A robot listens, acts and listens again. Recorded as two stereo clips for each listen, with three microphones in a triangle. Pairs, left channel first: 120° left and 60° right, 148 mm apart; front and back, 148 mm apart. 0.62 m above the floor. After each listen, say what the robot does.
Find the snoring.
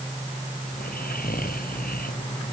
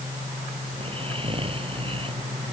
Turn 130° left.
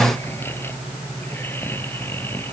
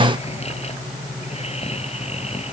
Turn 45° left.
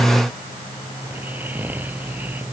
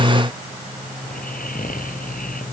Turn 20° left.
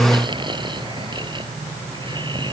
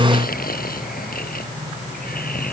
Found it: snoring, straight ahead.